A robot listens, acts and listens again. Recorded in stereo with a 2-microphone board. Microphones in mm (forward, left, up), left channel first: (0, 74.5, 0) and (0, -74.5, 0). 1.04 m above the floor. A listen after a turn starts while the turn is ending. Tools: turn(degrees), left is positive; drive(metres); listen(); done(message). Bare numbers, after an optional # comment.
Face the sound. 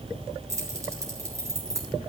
# The keys jangling: about 20° right or 160° right.
turn(-20)
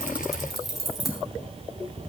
turn(30)
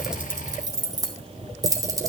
# So it is at 20° right.
turn(-20)
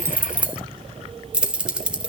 done("Facing the keys jangling, 1 to 2 m away.")